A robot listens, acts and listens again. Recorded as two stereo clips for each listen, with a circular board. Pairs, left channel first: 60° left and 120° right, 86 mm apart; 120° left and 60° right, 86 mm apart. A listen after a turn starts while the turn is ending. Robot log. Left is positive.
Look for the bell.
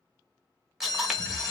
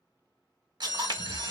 note: The bell: 100° left.
cmd yaw +100
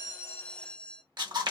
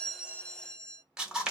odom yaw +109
end: Facing the bell.